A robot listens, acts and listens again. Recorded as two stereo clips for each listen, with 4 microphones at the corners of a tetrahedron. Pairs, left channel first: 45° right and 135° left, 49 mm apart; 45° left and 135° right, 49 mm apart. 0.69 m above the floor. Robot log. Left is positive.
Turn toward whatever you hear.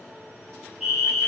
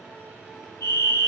note: The fire alarm: 45° left.
cmd yaw +45
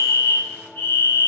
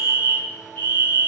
end: Facing the fire alarm, over 4 m away.